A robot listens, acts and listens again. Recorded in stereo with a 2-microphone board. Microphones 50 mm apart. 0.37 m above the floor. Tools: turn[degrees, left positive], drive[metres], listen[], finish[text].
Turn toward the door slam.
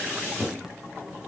Action: listen[]
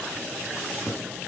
Action: listen[]
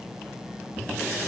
Action: finish[I can't make out a door slam.]